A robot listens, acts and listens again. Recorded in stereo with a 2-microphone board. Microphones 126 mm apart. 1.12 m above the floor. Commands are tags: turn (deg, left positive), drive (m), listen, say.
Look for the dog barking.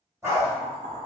<turn deg="-20"/>
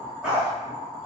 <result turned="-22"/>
<say>Facing the dog barking.</say>